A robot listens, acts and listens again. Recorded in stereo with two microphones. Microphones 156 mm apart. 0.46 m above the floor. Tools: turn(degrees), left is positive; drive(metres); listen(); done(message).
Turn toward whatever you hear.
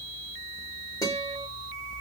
turn(degrees=25)
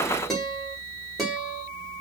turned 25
done("Found it: a guitar, straight ahead.")